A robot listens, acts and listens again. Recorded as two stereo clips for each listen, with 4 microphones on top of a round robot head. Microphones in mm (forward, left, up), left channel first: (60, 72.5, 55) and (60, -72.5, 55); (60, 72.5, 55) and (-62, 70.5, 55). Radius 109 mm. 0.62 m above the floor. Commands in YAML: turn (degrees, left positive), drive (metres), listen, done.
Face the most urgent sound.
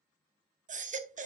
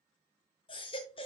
turn: -55
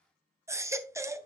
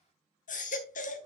turn: -20
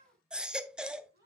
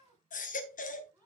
done: "Found it: a baby crying, straight ahead."